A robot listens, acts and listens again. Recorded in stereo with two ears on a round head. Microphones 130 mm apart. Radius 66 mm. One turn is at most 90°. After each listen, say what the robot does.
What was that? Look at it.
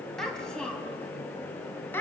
Turn 30° left.
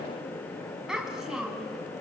Facing the child speaking, 2 to 4 m away.